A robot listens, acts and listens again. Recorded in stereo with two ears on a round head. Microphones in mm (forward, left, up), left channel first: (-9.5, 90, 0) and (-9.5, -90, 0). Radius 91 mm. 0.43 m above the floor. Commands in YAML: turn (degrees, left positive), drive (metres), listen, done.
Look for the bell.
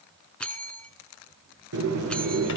turn: 30
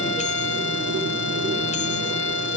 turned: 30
listen: true
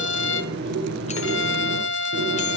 listen: true
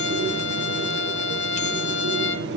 done: "I heard a bell, but can't make it out now. It was about 25° right or 145° left."